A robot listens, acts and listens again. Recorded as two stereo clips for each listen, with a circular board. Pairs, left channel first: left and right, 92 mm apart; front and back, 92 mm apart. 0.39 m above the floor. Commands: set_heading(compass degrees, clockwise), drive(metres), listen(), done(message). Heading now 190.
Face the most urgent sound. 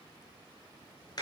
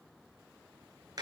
listen()
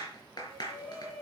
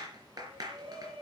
set_heading(25)
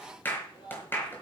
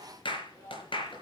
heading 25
set_heading(330)
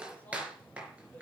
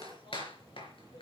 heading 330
listen()
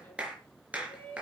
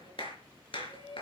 set_heading(310)
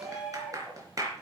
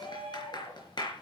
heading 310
done("Facing the shout.")